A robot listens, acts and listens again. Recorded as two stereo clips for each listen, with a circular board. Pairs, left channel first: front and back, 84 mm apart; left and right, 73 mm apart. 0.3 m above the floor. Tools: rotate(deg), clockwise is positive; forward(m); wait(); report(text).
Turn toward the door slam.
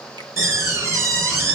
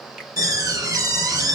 rotate(125)
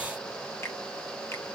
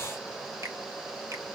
report("I heard a door slam from this way, but can't make it out now.")